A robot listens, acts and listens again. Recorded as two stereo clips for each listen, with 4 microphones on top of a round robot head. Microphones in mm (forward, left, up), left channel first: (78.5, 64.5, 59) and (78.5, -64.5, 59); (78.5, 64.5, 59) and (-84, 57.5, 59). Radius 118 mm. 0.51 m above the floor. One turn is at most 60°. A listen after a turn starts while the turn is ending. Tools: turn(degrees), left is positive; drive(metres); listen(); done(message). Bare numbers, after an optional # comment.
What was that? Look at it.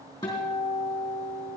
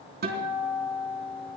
# The guitar: 160° left.
turn(60)
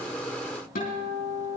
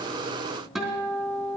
# The guitar is now 95° left.
turn(60)
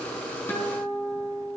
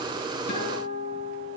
# The guitar is now 15° left.
turn(15)
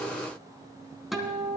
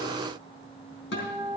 done("Found it: a guitar, straight ahead.")